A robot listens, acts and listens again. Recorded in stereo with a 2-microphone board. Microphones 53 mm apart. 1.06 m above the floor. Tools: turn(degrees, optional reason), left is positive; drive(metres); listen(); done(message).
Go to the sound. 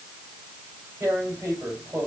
turn(degrees=-65, reason="The tearing paper: about 65° right or 115° right.")
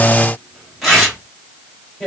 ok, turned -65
drive(metres=1.0)
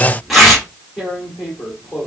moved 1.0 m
drive(metres=1.0)
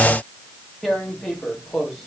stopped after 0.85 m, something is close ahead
done("I am next to the tearing paper.")